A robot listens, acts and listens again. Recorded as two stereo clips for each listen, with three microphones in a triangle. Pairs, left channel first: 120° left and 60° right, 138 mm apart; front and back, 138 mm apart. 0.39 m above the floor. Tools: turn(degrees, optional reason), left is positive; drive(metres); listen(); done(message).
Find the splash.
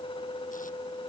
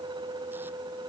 listen()
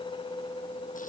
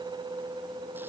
listen()
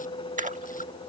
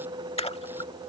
turn(degrees=-45, reason="The splash: 45° right.")
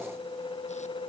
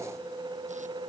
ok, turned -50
done("Facing where the splash came from. I can't hear it now.")